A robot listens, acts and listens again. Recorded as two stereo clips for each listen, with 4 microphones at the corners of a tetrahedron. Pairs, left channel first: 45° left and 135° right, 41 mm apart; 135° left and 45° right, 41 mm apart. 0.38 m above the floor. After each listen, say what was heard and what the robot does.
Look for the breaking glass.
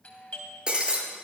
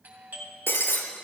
The breaking glass: 160° left. Turn 160° left.
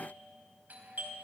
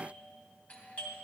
I heard breaking glass from this way, but can't make it out now.